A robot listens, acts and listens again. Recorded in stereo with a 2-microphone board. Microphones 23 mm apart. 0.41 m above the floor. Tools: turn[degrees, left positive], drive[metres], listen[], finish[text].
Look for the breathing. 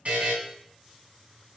Action: listen[]
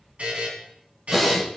Action: turn[-30]
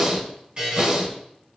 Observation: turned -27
Thought: So it is at 150° right.
Action: turn[-150]
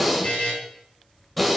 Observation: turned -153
Action: finish[Found it: breathing, straight ahead, 1 to 2 m away.]